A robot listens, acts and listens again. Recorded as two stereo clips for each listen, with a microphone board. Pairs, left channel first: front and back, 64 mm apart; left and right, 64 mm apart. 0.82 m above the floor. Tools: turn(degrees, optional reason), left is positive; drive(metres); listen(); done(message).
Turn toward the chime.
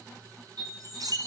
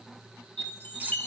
turn(degrees=155, reason="The chime: 155° left.")
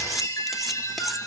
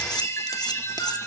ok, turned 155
turn(degrees=40, reason="The chime is now 40° left.")
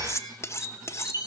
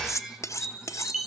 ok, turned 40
done("Facing the chime.")